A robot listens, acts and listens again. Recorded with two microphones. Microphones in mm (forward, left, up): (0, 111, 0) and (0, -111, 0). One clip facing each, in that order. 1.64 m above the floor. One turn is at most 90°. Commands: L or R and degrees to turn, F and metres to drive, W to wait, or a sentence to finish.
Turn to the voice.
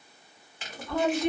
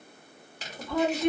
R30
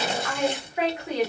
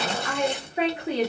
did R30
R90
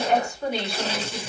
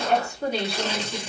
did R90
R35
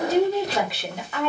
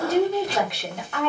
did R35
Found it: a woman speaking, straight ahead.